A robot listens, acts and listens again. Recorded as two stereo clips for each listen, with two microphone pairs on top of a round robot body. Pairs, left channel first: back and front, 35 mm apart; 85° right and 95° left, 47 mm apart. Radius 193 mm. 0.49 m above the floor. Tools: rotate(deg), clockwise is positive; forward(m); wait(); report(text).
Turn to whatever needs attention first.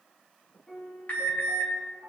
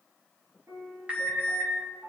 rotate(-160)
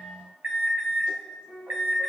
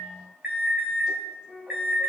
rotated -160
rotate(-25)
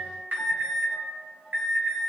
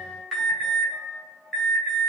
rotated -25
report("Facing the alarm.")